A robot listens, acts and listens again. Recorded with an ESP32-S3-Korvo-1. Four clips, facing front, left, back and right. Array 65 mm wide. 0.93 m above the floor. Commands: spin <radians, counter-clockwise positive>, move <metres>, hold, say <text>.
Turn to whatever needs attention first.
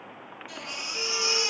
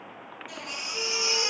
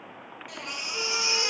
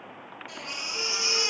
spin -2.88
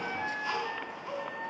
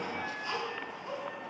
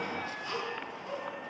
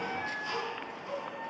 say Facing the baby crying.